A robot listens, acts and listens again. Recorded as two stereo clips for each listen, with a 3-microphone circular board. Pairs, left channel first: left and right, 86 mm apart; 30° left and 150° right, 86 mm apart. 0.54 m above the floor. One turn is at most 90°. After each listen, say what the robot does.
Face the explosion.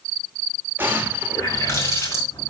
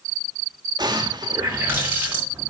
Turn 90° right.
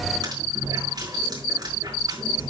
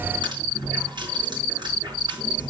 Turn 60° right.
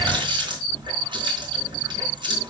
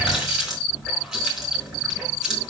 I heard an explosion from this way, but can't make it out now.